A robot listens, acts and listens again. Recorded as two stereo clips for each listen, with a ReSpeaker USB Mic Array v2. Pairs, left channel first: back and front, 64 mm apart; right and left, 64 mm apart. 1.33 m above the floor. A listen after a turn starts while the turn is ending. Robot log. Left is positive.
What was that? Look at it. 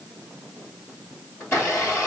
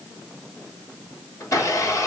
note: The blender: 130° right.
cmd yaw -130
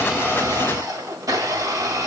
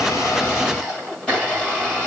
note: The blender is now 15° right.
cmd yaw -15
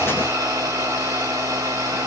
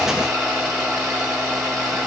end: Facing the blender, 1 to 2 m away.